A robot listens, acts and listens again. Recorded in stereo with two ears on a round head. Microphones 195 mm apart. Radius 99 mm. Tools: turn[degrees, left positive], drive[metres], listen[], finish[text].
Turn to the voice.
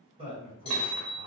Thought: The man speaking: about 30° right or 150° right.
Action: turn[-30]
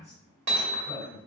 Action: finish[Facing the man speaking.]